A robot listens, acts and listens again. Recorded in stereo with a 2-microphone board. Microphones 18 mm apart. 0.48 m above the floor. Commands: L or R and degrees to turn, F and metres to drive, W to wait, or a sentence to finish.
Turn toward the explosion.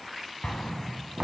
L45
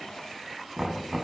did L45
W
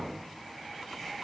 I heard an explosion, but can't make it out now. It was about straight ahead or 90° left.